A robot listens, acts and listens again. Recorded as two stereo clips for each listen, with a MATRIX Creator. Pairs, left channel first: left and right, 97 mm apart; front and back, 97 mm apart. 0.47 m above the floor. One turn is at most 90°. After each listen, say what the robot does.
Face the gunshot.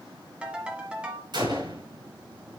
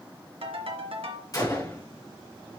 Turn 55° right.
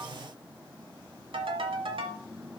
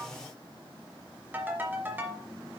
Facing where the gunshot came from. I can't hear it now.